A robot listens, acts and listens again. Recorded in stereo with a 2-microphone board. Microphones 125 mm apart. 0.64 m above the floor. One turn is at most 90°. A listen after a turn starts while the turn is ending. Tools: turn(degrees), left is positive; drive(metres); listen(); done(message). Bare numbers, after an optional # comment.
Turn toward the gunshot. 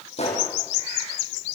# The gunshot: about 55° left or 125° left.
turn(55)
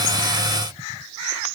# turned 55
listen()
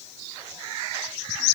done("I heard a gunshot, but can't make it out now. It was about straight ahead or 70° left.")